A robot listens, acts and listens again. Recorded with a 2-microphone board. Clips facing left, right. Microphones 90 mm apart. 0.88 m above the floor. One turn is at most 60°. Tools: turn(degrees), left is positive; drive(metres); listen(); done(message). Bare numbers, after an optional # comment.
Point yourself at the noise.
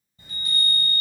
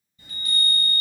# The chime: about 40° left or 140° left.
turn(40)
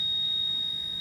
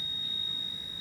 done("Facing the chime, 1 to 2 m away.")